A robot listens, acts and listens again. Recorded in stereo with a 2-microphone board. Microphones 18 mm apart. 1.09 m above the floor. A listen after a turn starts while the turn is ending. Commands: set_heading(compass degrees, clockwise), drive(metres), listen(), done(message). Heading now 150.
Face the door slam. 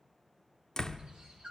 set_heading(115)
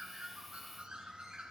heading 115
listen()
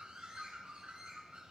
done("I heard a door slam, but can't make it out now. It was about straight ahead or 110° left.")